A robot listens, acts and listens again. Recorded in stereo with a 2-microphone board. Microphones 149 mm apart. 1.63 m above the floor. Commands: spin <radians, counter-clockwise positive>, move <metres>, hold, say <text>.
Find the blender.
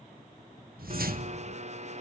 spin -0.87
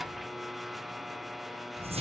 say Found it: a blender, straight ahead, under 1 m away.